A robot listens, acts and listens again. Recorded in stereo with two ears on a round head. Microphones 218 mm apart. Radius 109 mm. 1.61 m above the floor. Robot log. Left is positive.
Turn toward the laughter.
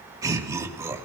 cmd yaw -30
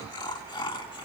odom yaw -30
note: So it is at 20° left.
cmd yaw +20
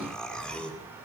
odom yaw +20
end: Facing the laughter, 2 to 4 m away.